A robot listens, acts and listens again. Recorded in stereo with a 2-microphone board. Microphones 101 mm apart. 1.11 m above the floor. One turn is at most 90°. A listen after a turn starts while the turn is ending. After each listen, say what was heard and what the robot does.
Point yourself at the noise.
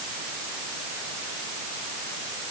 Keep listening.
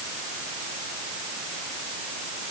Keep listening.
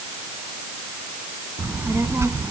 The child speaking: about 25° right or 155° right. Turn 25° right.
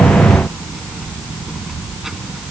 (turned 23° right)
Facing the child speaking.